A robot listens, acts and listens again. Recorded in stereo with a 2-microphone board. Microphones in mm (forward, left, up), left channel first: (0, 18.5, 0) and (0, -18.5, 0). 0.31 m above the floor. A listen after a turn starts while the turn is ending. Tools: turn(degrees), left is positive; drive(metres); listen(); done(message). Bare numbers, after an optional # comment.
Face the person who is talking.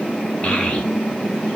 # The child speaking: about 30° left or 150° left.
turn(30)
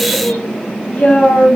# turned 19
# So it is at 140° left.
turn(140)
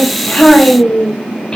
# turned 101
# The child speaking is now 30° left.
turn(30)
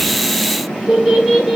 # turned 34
done("Facing the child speaking, 1 to 2 m away.")